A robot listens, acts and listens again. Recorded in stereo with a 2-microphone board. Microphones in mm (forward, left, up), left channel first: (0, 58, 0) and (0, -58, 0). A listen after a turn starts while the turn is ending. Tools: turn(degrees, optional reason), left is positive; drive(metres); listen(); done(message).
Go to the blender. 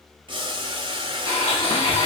turn(degrees=35, reason="The blender: about 35° left or 145° left.")
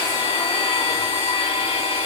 turn(degrees=105, reason="So it is at 105° left.")
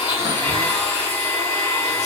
turn(degrees=10, reason="The blender is now 10° left.")
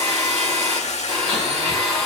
drive(metres=1.0)
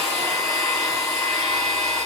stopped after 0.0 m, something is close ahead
done("Something is in my way. I am facing the blender but have not reached it.")